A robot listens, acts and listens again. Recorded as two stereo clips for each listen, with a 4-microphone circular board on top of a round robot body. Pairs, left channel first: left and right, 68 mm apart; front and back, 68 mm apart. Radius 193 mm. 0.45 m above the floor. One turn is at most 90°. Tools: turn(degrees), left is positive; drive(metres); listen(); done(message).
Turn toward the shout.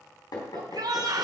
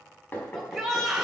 turn(degrees=-90)
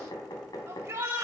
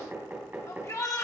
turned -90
turn(degrees=-40)
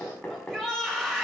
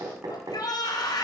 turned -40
done("Facing the shout.")